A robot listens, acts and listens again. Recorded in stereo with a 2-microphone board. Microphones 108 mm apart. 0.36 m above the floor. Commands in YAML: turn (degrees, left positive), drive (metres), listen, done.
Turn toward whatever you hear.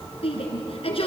turn: 60
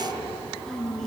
done: "Found it: a shout, straight ahead, over 4 m away."